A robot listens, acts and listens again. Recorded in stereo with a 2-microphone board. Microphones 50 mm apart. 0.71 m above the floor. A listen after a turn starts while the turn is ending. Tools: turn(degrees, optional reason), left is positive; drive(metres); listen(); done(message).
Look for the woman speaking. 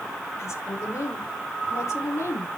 turn(degrees=70, reason="The woman speaking: about 70° left or 110° left.")
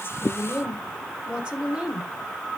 turn(degrees=-20, reason="So it is at 20° right.")
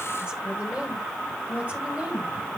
turn(degrees=-30, reason="The woman speaking is now 30° right.")
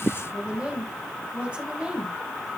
turn(degrees=-20, reason="The woman speaking is now 20° right.")
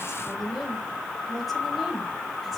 done("Facing the woman speaking.")